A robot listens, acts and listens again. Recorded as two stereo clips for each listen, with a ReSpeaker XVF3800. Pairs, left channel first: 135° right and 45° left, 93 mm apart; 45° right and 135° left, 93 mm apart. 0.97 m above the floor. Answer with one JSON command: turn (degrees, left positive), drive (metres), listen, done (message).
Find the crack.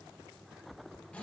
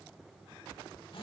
{"listen": true}
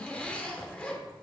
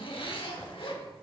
{"listen": true}
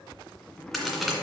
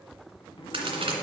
{"turn": 135}
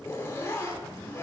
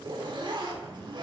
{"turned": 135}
{"done": "Facing where the crack came from. I can't hear it now."}